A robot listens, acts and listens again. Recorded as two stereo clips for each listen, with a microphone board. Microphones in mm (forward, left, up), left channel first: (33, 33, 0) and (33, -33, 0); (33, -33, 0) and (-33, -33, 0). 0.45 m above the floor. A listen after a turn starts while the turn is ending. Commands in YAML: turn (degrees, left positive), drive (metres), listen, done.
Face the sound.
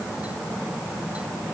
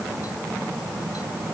listen: true
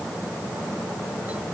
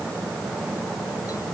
listen: true
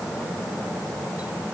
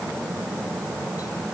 done: "I can't make out anything to turn to."